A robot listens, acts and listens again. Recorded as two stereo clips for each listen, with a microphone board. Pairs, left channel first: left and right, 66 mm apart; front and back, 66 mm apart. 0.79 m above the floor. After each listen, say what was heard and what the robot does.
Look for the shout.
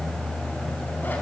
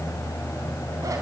Keep listening.
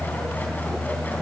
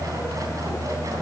Keep listening.
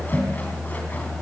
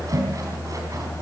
I can't make out a shout to turn to.